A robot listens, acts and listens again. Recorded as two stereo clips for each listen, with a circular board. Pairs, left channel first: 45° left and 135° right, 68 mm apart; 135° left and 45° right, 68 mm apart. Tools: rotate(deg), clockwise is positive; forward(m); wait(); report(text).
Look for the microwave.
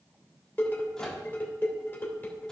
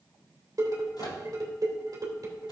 rotate(-125)
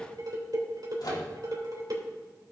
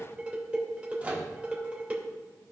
rotate(-25)
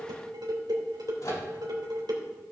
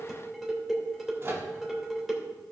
rotate(-10)
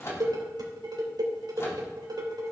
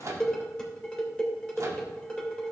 report("Found it: a microwave, straight ahead, 1 to 2 m away.")